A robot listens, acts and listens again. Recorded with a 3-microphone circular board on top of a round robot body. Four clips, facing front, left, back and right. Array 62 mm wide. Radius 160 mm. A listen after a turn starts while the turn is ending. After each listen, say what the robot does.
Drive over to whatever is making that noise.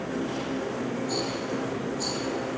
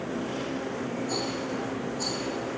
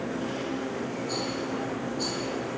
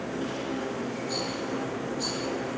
Turn 100° left.
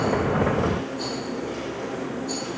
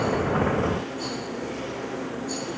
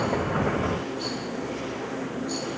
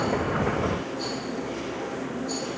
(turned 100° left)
Turn 10° left.
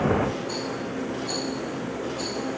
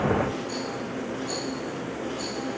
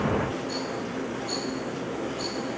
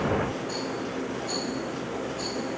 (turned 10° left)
Drive 1.0 m forward.
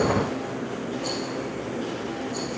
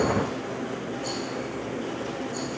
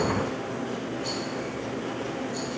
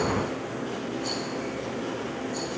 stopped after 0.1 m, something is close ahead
Blocked. The rattle is further on, straight ahead.